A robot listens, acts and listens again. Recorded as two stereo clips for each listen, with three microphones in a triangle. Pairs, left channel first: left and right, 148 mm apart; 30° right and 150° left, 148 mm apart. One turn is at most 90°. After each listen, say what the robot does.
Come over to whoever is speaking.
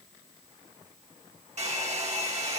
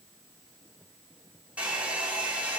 Keep listening.
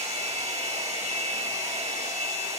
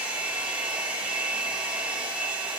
Keep listening.
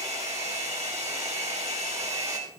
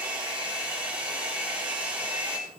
I can't make out anyone speaking to turn to.